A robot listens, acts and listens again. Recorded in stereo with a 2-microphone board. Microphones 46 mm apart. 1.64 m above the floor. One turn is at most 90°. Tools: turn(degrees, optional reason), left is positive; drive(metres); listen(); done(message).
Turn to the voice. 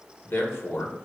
turn(degrees=75, reason="The man speaking: about 75° left or 105° left.")
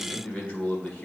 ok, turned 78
turn(degrees=25, reason="So it is at 25° left.")
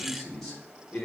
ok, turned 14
turn(degrees=10, reason="The man speaking is now 10° left.")
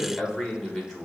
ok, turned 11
done("Found it: a man speaking, straight ahead, 1 to 2 m away.")